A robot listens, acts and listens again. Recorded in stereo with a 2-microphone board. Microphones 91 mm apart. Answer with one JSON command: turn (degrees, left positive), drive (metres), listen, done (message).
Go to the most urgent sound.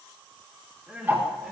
{"turn": -30}
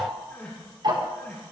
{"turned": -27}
{"turn": 20}
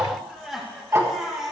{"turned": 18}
{"drive": 1.0}
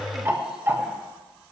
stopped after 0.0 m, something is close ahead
{"listen": true}
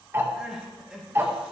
{"done": "Blocked. The crying is further on, straight ahead."}